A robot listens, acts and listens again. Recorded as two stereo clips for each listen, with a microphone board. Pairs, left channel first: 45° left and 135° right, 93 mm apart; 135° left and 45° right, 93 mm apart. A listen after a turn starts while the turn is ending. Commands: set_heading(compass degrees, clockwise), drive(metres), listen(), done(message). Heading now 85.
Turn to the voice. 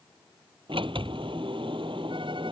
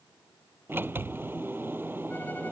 listen()
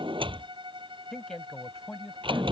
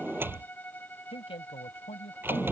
set_heading(315)
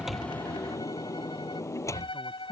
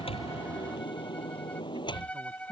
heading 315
listen()
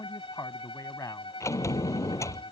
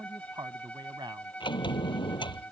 set_heading(325)
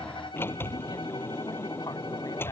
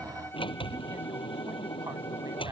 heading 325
listen()
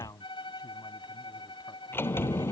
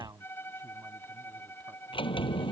done("Found it: a man speaking, straight ahead.")